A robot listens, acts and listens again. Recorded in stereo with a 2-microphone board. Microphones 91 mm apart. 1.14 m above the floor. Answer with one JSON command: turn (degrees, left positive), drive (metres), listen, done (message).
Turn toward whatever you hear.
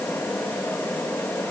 {"listen": true}
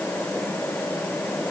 {"listen": true}
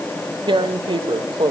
{"turn": -65}
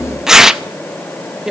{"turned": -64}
{"done": "Facing the tearing paper, under 1 m away."}